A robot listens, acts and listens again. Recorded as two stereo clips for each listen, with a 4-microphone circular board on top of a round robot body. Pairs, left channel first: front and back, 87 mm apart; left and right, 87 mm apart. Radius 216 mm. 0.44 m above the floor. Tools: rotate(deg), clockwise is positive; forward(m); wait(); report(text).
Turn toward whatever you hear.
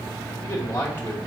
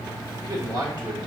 rotate(60)
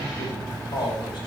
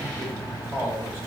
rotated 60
rotate(30)
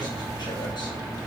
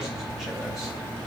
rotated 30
wait()
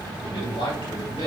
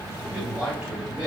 rotate(15)
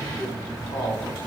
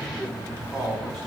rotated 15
report("Found it: a man speaking, straight ahead, over 4 m away.")